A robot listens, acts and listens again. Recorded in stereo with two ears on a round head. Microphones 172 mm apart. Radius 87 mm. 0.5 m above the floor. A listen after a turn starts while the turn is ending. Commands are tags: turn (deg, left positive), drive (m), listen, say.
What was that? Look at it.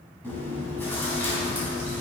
<turn deg="30"/>
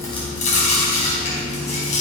<turn deg="135"/>
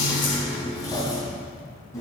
<turn deg="20"/>
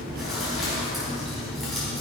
<say>Facing the chewing.</say>